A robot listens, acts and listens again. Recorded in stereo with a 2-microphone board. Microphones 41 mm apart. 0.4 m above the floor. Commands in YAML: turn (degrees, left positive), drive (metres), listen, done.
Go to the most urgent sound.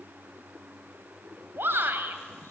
turn: -60
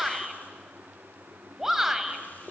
turn: -10
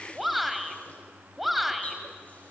drive: 1.0
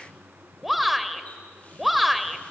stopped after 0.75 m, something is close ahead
done: "I am next to the shout."